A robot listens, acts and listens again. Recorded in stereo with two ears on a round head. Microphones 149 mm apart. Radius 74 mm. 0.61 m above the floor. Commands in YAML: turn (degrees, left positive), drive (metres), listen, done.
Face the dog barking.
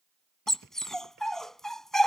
turn: 30
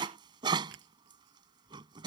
turn: -30
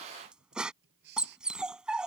done: "Facing the dog barking."